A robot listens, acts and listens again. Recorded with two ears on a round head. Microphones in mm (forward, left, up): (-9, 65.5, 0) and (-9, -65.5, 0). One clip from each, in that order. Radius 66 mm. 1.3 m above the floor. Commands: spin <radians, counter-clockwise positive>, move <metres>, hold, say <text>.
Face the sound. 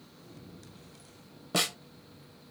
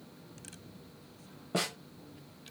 spin 1.31
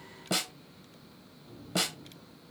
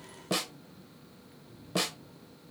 spin 0.17
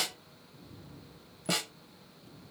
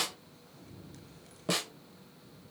say Found it: a snare drum, straight ahead.